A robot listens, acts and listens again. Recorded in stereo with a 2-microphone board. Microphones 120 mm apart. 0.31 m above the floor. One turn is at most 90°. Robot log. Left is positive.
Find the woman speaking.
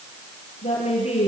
note: The woman speaking: about 65° left or 115° left.
cmd yaw +65
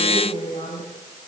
note: So it is at 50° left.
cmd yaw +50
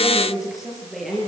end: Found it: a woman speaking, straight ahead, over 4 m away.